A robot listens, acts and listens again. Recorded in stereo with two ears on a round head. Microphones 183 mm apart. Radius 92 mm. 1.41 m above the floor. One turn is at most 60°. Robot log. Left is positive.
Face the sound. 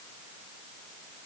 cmd idle
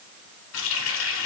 note: The running tap: about 70° left or 110° left.
cmd yaw +60
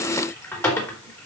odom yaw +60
note: So it is at 15° left.
cmd yaw +15
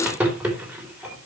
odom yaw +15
end: Found it: a running tap, straight ahead, 2 to 4 m away.